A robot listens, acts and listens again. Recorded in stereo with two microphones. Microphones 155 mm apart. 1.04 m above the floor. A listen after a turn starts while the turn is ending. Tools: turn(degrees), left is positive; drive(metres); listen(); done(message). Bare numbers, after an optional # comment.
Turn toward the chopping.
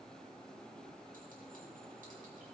listen()
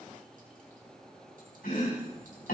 turn(90)
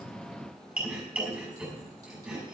# So it is at 10° right.
turn(-10)
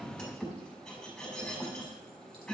done("Found it: chopping, straight ahead, over 4 m away.")